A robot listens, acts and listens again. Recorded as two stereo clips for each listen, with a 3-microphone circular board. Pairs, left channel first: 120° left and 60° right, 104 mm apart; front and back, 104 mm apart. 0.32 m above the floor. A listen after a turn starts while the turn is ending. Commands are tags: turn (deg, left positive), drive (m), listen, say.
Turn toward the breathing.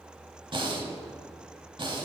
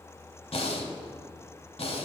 <turn deg="-20"/>
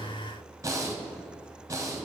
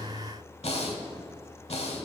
<say>Facing the breathing, under 1 m away.</say>